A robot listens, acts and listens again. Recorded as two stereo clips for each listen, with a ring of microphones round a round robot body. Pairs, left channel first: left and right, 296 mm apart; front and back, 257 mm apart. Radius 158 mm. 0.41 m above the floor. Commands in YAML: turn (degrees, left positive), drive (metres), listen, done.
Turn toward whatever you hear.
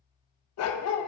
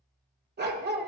turn: 125
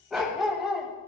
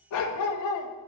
done: "Found it: a dog barking, straight ahead."